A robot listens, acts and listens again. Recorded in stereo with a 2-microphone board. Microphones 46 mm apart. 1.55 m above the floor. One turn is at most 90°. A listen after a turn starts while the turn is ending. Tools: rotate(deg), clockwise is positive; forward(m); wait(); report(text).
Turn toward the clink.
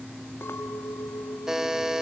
rotate(-70)
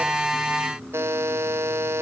wait()
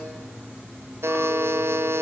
wait()
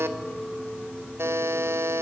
rotate(-10)
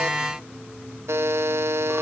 wait()
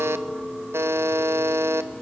report("Found it: a clink, straight ahead, 2 to 4 m away.")